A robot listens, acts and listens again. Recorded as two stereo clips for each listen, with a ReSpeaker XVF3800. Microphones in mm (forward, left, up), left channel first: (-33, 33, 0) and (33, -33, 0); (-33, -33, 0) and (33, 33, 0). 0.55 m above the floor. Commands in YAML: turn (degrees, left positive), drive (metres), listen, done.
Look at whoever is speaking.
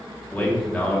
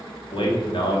turn: -150
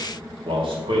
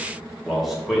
turn: -40
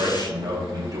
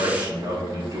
done: "Facing the man speaking."